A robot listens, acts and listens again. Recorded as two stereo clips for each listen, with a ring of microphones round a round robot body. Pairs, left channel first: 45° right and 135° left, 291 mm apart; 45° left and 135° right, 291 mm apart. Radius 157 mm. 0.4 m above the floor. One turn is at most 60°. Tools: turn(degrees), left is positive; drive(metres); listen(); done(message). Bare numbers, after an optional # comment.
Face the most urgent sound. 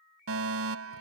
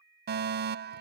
# The fire alarm: 170° left.
turn(60)
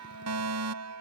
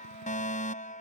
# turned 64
# The fire alarm is now 110° left.
turn(60)
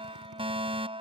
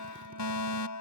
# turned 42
# The fire alarm is now 65° left.
turn(60)
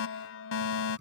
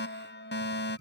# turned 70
done("Facing the fire alarm.")